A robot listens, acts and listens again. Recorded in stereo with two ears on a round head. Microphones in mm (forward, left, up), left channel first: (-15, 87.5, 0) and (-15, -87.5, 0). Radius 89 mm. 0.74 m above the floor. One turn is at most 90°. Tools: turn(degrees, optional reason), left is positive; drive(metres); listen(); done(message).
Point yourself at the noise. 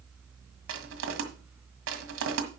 turn(degrees=-75, reason="The crushing: about 75° right or 105° right.")
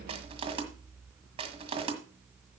turn(degrees=-30, reason="So it is at 30° right.")
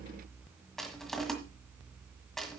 done("Facing the crushing.")